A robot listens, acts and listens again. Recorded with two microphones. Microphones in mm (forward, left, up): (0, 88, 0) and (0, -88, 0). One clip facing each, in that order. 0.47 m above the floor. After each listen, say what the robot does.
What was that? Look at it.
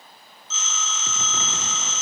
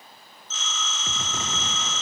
Turn 60° right.
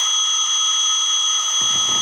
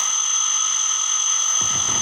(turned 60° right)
Found it: a phone ringing, straight ahead, 1 to 2 m away.